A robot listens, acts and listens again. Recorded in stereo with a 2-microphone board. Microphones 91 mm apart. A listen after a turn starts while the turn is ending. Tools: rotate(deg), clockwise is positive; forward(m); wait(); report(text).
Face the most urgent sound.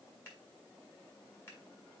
wait()
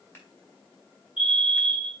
rotate(-60)
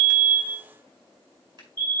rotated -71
rotate(-20)
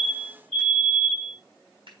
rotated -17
report("Facing the fire alarm.")